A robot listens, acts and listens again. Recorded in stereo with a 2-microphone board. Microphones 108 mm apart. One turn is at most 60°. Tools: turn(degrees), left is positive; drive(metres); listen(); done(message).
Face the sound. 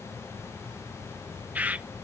turn(degrees=-30)
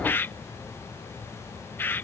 turn(degrees=20)
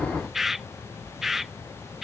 done("Facing the bird.")